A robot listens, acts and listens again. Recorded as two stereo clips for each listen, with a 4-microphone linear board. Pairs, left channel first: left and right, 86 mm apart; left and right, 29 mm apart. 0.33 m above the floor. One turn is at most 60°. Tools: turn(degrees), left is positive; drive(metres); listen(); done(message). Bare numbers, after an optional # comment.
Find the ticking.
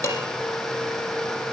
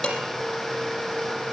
listen()
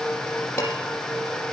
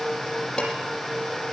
listen()
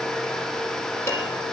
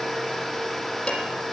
done("I can't make out ticking to turn to.")